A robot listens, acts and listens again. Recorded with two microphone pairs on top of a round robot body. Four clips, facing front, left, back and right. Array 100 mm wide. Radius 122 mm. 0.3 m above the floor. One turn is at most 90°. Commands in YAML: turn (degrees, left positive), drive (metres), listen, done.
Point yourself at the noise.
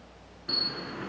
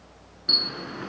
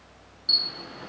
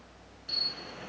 turn: 65
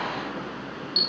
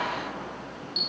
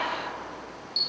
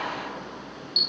done: "Found it: a camera shutter, straight ahead."